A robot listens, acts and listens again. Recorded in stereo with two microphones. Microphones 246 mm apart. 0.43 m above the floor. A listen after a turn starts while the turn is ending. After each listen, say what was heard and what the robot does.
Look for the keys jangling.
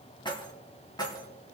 The keys jangling: about 15° left or 165° left. Turn 15° left.
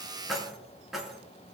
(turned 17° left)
Turn 30° left.
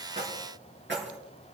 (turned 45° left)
So it is at 50° right. Turn 50° right.
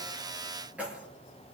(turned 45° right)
Facing the keys jangling.